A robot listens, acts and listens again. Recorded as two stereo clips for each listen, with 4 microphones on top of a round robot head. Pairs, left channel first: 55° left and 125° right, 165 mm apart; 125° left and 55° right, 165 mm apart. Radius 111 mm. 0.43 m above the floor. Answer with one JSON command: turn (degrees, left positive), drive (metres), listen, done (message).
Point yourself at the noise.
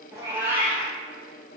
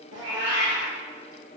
{"turn": -45}
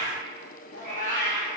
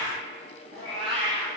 {"turn": 15}
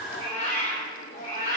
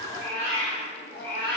{"turn": 10}
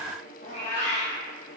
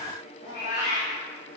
{"done": "Facing the cat meowing."}